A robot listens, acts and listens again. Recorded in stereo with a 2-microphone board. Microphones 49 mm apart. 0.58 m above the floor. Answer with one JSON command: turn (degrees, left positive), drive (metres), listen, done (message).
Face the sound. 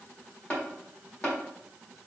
{"turn": 25}
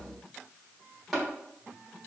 {"done": "Facing the tapping."}